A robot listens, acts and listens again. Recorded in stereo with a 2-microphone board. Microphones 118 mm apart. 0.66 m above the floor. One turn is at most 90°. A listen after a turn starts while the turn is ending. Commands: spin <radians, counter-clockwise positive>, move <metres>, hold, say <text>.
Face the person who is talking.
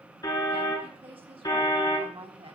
spin -0.87
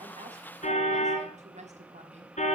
spin -1.40
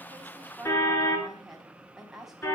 say Found it: a woman speaking, straight ahead, over 4 m away.